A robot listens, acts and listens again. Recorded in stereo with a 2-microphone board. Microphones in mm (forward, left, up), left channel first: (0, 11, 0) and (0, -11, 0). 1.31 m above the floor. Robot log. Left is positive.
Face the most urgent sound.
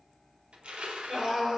note: The scream: about 25° right or 155° right.
cmd yaw -25
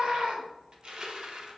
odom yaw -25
note: So it is at 135° right.
cmd yaw -135
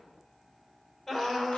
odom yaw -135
note: The scream is now 10° left.
cmd yaw +10
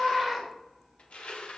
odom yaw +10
end: Found it: a scream, straight ahead, over 4 m away.